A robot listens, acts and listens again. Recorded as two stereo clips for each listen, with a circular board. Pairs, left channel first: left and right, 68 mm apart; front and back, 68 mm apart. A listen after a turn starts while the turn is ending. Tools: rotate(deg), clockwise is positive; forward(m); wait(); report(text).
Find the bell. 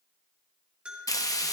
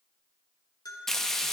rotate(15)
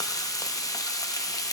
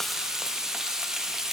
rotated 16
wait()
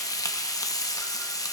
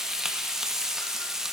wait()
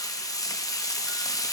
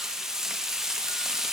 report("Facing where the bell came from. I can't hear it now.")